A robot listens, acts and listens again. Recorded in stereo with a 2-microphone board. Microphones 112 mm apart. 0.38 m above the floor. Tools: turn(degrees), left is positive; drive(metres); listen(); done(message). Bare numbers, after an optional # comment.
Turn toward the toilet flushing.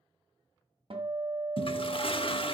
# The toilet flushing: about 50° left or 130° left.
turn(50)
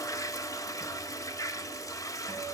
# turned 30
# So it is at 35° left.
turn(35)
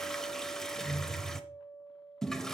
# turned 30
done("Facing the toilet flushing.")